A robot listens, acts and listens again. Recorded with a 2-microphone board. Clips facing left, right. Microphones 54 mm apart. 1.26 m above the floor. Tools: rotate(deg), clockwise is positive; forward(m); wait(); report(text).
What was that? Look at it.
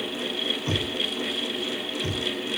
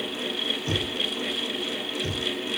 rotate(-25)
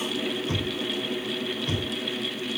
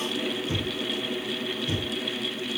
rotate(-130)
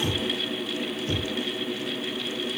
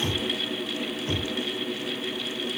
rotate(30)
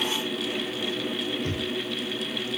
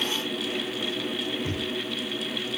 rotate(10)
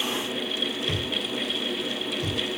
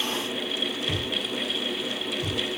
report("Found it: knocking, straight ahead.")